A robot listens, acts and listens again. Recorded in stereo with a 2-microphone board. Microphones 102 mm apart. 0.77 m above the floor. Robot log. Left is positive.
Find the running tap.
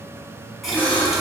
cmd yaw +30
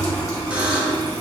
note: So it is at 150° left.
cmd yaw +150
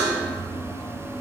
note: The running tap is now 25° left.
cmd yaw +25
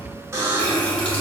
note: The running tap is now 15° left.
cmd yaw +15
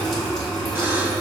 end: Found it: a running tap, straight ahead, 1 to 2 m away.